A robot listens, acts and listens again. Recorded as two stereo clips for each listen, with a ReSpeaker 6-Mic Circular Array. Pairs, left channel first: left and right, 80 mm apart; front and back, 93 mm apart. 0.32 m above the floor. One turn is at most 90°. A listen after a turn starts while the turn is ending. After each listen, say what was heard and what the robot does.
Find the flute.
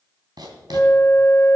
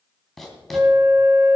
The flute: 130° left. Turn 90° left.
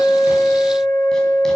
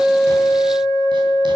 The flute is now 30° left. Turn 30° left.
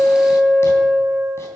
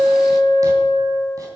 Facing the flute.